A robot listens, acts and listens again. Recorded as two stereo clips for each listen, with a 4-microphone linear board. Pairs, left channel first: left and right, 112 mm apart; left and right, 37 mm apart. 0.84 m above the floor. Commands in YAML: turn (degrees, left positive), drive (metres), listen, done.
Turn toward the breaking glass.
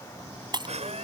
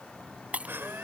turn: -40
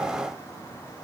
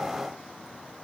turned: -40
listen: true
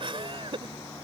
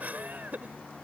done: "I heard breaking glass, but can't make it out now. It was about straight ahead or 100° right."